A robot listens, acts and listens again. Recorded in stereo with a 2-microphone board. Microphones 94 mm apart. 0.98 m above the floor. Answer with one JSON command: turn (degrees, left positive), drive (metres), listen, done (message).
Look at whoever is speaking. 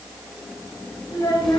{"turn": 35}
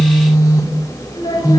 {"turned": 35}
{"listen": true}
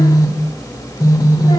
{"listen": true}
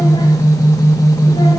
{"done": "I heard a child speaking, but can't make it out now. It was about straight ahead or 110° left."}